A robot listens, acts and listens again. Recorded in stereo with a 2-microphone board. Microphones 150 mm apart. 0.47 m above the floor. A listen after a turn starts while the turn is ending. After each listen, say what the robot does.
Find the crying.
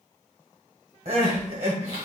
Turn 45° right.
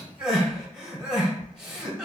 Found it: crying, straight ahead.